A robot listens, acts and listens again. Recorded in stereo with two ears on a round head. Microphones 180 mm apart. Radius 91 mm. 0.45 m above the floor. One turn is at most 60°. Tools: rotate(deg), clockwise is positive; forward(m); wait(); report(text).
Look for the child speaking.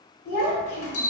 rotate(-55)
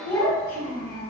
rotate(-35)
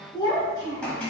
rotate(-20)
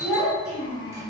rotate(-10)
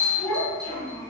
rotate(-10)
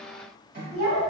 report("Found it: a child speaking, straight ahead, 2 to 4 m away.")